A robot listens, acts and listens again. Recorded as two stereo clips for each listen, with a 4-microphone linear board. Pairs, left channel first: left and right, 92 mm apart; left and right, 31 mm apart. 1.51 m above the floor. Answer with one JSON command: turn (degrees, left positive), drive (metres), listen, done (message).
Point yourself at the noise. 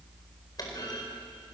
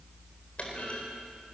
{"turn": 45}
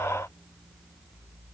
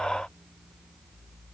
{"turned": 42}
{"listen": true}
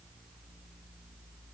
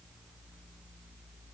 {"done": "I heard a clunk, but can't make it out now. It was about 5° left or 90° left."}